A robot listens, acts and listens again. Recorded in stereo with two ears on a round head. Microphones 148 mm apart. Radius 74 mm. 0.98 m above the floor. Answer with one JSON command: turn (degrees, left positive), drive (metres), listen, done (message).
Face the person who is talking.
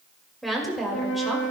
{"turn": 30}
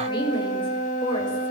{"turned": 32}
{"turn": 150}
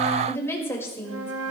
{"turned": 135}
{"turn": 15}
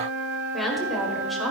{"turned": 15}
{"done": "Found it: a woman speaking, straight ahead."}